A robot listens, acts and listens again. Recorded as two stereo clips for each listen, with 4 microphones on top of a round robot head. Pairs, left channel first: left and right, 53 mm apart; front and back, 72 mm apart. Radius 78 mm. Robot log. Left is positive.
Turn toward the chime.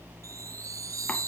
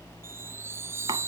note: The chime: 120° right.
cmd yaw -120
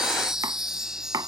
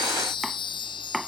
note: The chime is now 10° right.
cmd yaw -10
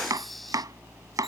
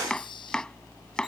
cmd idle
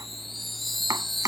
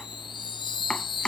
end: Found it: a chime, straight ahead.